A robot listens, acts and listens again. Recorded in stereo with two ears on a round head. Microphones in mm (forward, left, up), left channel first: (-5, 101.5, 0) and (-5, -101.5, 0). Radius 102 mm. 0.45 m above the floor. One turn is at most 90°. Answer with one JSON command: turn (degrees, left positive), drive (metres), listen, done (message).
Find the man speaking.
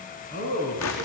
{"turn": 40}
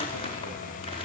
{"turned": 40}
{"listen": true}
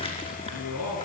{"turn": 90}
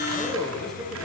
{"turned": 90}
{"done": "Found it: a man speaking, straight ahead."}